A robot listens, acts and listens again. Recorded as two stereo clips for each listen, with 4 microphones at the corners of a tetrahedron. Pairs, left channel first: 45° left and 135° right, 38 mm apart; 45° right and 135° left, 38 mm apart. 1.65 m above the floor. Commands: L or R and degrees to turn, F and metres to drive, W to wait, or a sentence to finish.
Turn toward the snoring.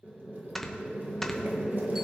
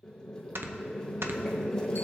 L130
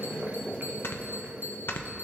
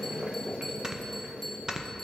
L65
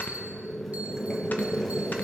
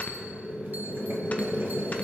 W
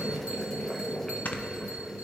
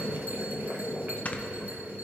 Found it: snoring, straight ahead, under 1 m away.